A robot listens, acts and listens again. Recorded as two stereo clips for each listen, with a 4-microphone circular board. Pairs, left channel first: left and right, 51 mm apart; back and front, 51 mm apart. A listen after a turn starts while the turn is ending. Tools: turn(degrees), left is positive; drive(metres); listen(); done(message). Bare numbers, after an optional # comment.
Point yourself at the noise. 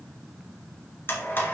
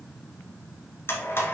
# The blender: 140° left.
turn(140)
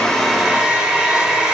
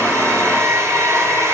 # The blender is now 15° right.
turn(-15)
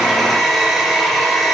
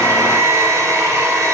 done("Facing the blender, 1 to 2 m away.")